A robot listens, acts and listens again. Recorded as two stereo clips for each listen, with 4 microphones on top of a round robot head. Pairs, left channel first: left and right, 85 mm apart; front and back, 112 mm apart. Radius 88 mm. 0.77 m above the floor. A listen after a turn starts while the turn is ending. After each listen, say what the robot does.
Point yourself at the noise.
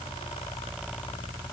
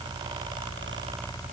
Keep listening.
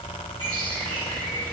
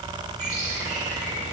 Turn 145° right.
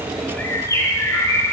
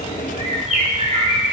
Turn 35° left.
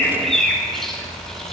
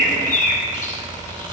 Facing the bird.